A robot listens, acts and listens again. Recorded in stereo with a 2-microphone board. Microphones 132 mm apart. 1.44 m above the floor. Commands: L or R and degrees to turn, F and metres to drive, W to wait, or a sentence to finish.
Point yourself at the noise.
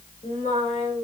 L70
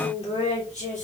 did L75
L70
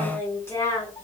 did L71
L25
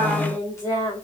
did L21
L25
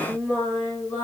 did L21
L15
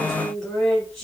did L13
Facing the singing.